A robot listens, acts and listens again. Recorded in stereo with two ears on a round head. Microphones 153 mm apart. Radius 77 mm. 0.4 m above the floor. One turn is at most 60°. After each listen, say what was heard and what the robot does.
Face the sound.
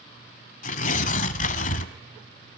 The tearing paper: about 45° left or 135° left. Turn 45° left.
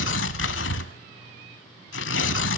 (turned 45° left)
So it is at 85° left. Turn 60° left.
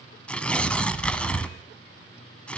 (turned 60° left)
Facing the tearing paper.